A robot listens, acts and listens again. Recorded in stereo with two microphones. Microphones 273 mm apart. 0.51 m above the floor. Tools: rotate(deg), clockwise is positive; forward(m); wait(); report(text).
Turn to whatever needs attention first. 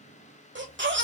rotate(45)
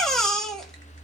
report("Found it: a baby crying, straight ahead.")